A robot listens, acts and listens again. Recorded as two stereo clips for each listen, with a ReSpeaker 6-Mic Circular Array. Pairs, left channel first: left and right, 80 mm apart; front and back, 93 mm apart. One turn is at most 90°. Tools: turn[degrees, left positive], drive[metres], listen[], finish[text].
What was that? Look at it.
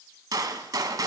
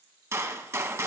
Thought: The gunshot: 125° right.
Action: turn[-90]
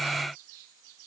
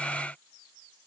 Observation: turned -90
Thought: Nothing new. It was at 35° right.
Action: turn[-35]
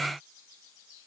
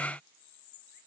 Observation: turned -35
Action: finish[Facing where the gunshot came from. I can't hear it now.]